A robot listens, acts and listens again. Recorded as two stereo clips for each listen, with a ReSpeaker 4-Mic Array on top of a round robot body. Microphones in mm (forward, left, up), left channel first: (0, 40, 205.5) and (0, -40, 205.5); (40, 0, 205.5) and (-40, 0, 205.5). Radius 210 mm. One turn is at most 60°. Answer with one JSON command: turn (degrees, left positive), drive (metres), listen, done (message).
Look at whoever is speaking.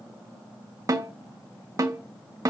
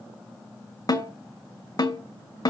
{"listen": true}
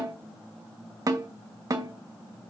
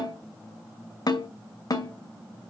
{"listen": true}
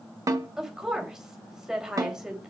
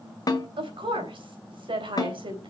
{"turn": -60}
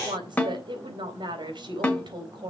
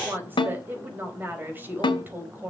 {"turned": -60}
{"turn": -60}
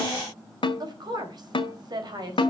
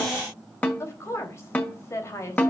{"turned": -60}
{"turn": -55}
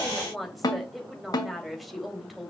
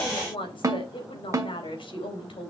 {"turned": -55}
{"done": "Found it: a woman speaking, straight ahead."}